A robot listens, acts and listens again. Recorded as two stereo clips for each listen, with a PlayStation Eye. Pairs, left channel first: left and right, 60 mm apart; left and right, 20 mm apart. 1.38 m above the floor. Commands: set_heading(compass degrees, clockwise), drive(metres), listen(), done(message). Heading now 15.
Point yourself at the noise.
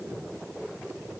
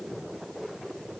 listen()
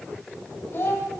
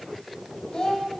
set_heading(340)
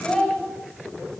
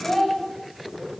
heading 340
done("Facing the child speaking.")